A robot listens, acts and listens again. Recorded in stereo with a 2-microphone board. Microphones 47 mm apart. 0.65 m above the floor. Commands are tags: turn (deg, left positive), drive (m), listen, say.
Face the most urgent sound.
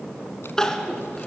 <turn deg="30"/>
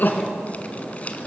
<turn deg="140"/>
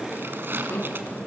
<turn deg="50"/>
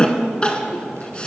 <turn deg="20"/>
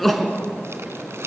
<say>Found it: crying, straight ahead, 2 to 4 m away.</say>